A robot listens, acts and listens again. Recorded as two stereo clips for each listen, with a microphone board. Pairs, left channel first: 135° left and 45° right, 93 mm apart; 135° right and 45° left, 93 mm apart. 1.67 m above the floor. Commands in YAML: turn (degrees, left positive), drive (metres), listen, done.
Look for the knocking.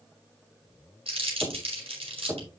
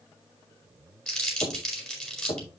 turn: -115
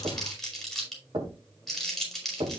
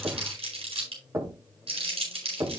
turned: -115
turn: -15
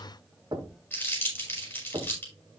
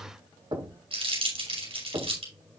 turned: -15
done: "Facing the knocking, 2 to 4 m away."